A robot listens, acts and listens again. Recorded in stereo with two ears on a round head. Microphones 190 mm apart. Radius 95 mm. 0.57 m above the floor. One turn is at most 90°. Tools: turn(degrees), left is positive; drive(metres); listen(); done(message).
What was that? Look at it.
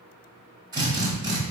turn(degrees=-20)
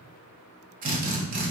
turn(degrees=-90)
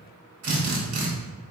turn(degrees=-75)
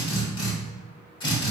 turn(degrees=25)
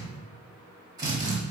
turn(degrees=-20)
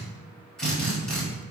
done("Found it: a drill, straight ahead, 1 to 2 m away.")